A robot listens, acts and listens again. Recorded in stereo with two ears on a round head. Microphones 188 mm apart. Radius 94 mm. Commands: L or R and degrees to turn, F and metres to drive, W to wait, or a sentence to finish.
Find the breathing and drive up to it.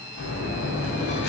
L55
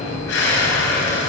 L65
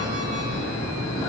L15
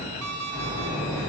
F1.0
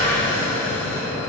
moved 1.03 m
L10
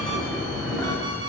F1.0
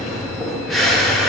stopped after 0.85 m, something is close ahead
Arrived at the breathing, straight ahead.